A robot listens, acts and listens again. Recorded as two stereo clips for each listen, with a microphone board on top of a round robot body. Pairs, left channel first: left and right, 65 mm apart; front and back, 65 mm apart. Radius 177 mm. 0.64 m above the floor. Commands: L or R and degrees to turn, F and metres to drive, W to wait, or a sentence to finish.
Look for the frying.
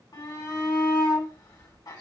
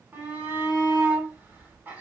W
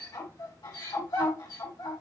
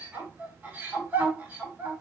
W
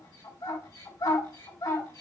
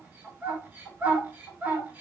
I can't make out frying, only a shout.